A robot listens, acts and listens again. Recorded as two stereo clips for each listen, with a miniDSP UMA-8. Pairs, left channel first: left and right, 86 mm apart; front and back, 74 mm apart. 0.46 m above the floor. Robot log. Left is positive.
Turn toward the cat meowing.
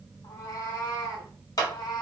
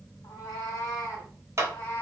note: The cat meowing: 60° left.
cmd yaw +60
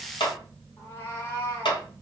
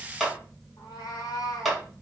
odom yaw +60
note: The cat meowing is now 35° left.
cmd yaw +35
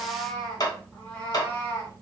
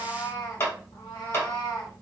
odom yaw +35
note: The cat meowing is now 20° left.
cmd yaw +20
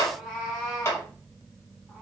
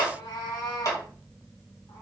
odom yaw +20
end: Facing the cat meowing, 2 to 4 m away.